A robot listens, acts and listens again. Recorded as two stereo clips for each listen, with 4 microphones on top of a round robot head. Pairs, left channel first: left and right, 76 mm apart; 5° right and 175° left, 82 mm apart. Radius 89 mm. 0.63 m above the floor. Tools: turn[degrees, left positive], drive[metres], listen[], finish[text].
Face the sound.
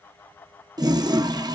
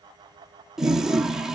Thought: The toilet flushing: 100° right.
Action: turn[-100]
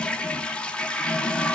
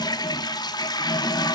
Thought: The toilet flushing is now 15° left.
Action: turn[15]
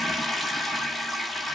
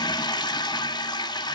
Action: finish[Facing the toilet flushing, 1 to 2 m away.]